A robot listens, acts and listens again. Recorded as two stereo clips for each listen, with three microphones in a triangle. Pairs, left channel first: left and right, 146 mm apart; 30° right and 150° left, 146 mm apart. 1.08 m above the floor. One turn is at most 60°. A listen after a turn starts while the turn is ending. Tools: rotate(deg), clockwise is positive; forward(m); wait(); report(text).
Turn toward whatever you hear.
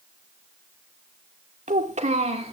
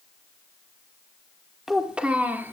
rotate(60)
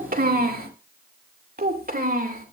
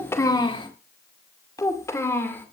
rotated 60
rotate(60)
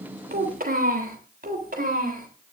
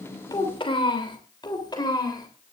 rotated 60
rotate(60)
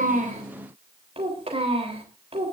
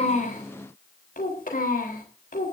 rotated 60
rotate(40)
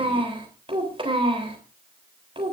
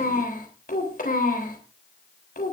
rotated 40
rotate(40)
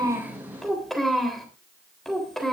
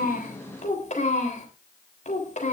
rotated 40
report("Found it: a child speaking, straight ahead.")